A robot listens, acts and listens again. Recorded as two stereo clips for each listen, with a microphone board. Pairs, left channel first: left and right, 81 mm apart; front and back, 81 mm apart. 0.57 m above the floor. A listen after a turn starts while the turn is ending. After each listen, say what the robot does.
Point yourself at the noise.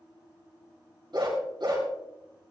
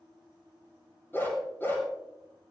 Turn 65° right.
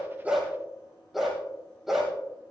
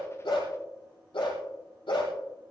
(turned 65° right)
Found it: a dog barking, straight ahead.